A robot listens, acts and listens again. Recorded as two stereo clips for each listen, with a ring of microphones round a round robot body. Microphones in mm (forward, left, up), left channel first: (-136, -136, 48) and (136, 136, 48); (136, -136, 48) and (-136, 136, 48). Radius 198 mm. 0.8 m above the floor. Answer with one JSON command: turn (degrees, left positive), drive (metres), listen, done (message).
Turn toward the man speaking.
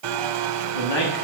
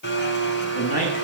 {"turn": -115}
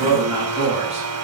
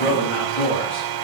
{"turn": -30}
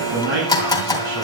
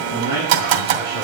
{"turn": 20}
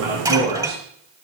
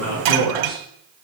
{"done": "Facing the man speaking, over 4 m away."}